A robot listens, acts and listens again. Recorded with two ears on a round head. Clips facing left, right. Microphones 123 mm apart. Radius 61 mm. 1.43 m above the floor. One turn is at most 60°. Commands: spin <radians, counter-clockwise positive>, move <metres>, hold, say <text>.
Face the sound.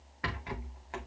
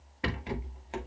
spin -0.44
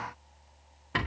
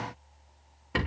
say Found it: a rattle, straight ahead, 2 to 4 m away.